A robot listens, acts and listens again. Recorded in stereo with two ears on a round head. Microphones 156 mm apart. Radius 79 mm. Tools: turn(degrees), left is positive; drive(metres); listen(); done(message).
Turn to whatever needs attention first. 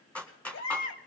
turn(degrees=65)
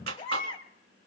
turn(degrees=30)
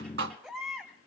done("Facing the baby crying, 2 to 4 m away.")